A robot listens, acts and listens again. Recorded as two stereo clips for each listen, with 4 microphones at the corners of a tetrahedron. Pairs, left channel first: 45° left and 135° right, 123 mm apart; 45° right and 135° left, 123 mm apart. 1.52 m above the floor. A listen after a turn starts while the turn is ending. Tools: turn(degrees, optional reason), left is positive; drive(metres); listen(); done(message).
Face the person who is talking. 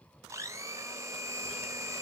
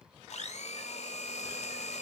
listen()
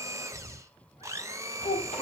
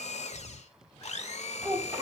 turn(degrees=60, reason="The child speaking: 60° left.")
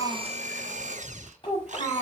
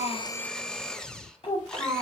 done("Facing the child speaking, over 4 m away.")